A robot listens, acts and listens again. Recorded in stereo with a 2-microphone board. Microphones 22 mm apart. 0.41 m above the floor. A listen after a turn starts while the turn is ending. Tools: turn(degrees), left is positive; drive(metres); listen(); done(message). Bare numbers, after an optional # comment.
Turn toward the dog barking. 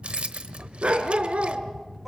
# The dog barking: about 70° right or 110° right.
turn(-70)
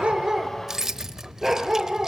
# So it is at 15° right.
turn(-15)
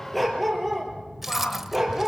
done("Facing the dog barking, over 4 m away.")